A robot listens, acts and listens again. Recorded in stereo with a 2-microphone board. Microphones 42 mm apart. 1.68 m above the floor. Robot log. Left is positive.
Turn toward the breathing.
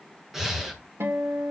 cmd yaw -30
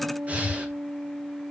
note: So it is at 145° right.
cmd yaw -145
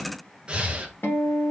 note: The breathing is now 25° right.
cmd yaw -25
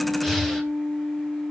end: Facing the breathing.